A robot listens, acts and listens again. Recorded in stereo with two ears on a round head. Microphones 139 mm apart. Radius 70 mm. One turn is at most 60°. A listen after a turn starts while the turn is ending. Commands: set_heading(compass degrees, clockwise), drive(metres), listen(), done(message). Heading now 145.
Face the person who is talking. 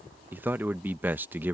set_heading(175)
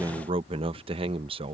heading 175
set_heading(235)
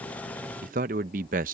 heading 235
set_heading(295)
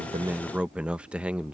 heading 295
set_heading(305)
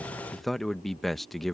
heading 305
done("Found it: a man speaking, straight ahead.")